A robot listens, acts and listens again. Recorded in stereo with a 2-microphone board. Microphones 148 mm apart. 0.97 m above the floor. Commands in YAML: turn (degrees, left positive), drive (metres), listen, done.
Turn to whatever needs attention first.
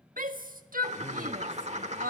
turn: -70
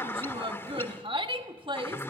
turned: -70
turn: -35
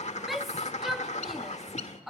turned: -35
done: "Facing the shout."